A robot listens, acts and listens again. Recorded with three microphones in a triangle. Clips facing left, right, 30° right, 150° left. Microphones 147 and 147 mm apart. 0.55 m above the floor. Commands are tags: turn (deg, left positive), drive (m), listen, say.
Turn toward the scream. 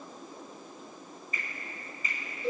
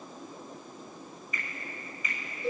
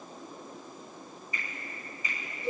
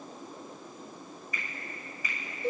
<listen/>
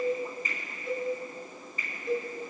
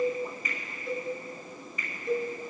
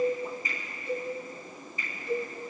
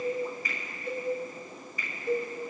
<listen/>
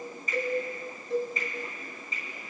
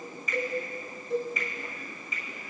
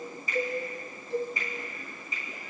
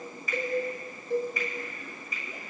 <say>I can't make out a scream to turn to.</say>